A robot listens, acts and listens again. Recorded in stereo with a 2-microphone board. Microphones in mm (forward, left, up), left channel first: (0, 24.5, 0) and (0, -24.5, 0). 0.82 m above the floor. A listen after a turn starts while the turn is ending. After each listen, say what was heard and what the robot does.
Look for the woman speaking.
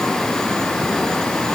Keep listening.
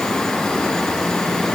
Keep listening.
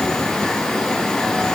I can't make out a woman speaking.